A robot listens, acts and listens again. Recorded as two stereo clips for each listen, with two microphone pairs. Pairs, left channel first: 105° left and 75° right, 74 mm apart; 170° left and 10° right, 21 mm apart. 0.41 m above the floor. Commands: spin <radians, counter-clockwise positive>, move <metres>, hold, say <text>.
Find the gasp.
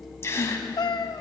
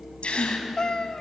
spin 2.79
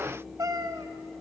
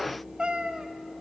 say Facing where the gasp came from. I can't hear it now.